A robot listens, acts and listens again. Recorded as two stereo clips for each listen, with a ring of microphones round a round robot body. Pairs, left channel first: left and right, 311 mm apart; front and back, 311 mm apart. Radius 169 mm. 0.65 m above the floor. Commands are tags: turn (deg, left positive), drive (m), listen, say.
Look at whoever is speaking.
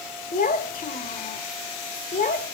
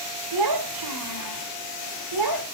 <turn deg="155"/>
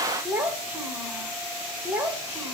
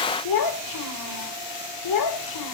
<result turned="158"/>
<say>Found it: a child speaking, straight ahead, 2 to 4 m away.</say>